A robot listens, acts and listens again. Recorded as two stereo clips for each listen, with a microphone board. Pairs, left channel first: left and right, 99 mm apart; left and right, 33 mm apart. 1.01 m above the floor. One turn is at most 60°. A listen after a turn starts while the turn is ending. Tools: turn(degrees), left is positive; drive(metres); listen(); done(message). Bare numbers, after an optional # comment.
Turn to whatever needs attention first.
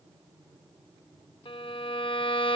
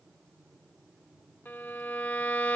listen()
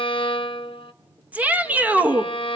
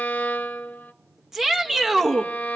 turn(-30)
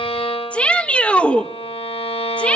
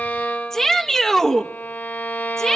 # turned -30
# So it is at 15° left.
turn(15)
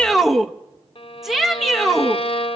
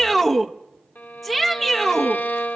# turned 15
done("Found it: a shout, straight ahead, 1 to 2 m away.")